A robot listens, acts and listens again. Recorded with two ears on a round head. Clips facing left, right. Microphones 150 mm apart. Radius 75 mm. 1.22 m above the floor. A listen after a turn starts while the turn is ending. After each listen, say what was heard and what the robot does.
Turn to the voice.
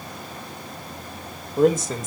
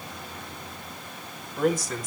The man speaking: about 20° left or 160° left. Turn 20° left.
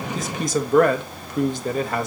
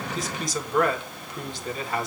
So it is at 135° left. Turn 135° left.
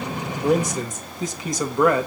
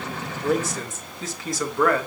The man speaking is now 15° left. Turn 15° left.
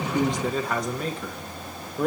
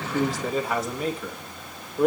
Facing the man speaking.